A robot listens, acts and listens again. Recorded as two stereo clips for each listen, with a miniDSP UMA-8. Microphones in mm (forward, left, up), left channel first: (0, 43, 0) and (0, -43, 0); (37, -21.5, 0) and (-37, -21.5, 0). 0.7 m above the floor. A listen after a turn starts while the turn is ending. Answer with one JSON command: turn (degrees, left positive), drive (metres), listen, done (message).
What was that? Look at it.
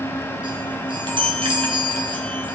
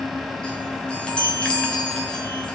{"turn": -75}
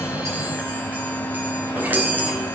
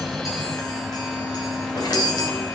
{"turn": -20}
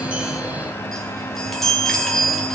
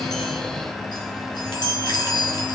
{"done": "Found it: a chime, straight ahead, 2 to 4 m away."}